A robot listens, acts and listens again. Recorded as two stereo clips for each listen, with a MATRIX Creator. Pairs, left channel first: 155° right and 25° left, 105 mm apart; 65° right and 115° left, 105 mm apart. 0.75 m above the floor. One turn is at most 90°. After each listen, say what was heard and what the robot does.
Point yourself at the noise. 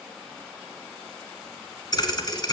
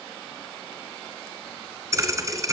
The thud: 165° left. Turn 90° left.
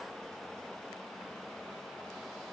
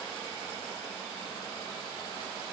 Nothing new. It was at 75° left. Turn 75° left.
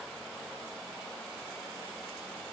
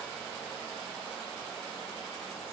Facing where the thud came from. I can't hear it now.